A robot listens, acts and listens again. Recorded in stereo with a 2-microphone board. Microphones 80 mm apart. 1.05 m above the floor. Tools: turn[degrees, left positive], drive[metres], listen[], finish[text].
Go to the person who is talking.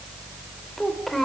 Action: turn[30]
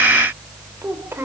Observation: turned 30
Thought: So it is at 30° right.
Action: turn[-30]
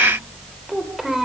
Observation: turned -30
Action: drive[1.0]
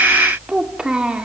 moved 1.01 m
Thought: The child speaking is now 10° right.
Action: turn[-10]
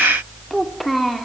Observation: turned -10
Action: drive[1.0]
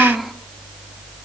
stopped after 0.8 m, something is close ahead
Action: finish[I am next to the child speaking.]